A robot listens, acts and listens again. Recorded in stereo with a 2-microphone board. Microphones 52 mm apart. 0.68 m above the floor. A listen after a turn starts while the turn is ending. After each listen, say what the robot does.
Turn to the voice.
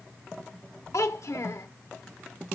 Turn 90° left.
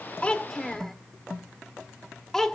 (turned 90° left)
Turn 10° left.
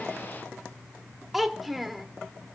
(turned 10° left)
Found it: a child speaking, straight ahead.